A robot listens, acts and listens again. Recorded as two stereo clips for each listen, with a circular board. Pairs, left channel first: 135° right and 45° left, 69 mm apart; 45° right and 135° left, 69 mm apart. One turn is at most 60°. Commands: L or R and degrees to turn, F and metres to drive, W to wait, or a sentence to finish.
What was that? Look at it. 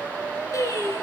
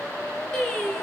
R60
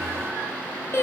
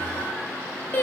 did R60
R60
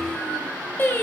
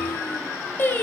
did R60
R60
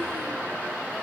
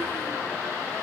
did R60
R35
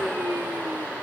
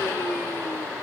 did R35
W
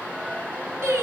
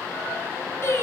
Facing the singing.